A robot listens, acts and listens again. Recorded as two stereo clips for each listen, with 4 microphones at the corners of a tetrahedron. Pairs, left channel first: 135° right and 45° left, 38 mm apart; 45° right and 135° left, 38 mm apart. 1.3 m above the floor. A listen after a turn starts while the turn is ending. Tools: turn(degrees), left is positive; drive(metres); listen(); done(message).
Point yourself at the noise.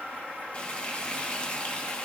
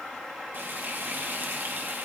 turn(degrees=165)
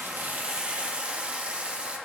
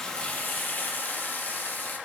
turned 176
turn(degrees=-15)
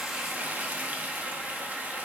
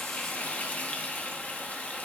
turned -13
done("Facing the frying.")